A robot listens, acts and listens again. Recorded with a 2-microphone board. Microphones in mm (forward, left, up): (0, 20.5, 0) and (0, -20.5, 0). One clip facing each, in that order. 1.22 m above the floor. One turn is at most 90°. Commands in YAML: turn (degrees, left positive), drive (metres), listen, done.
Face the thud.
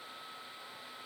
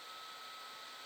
listen: true
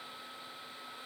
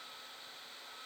listen: true
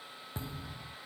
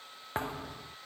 turn: -55
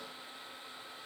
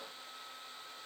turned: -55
listen: true
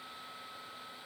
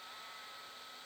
done: "I heard a thud, but can't make it out now. It was about straight ahead or 70° right."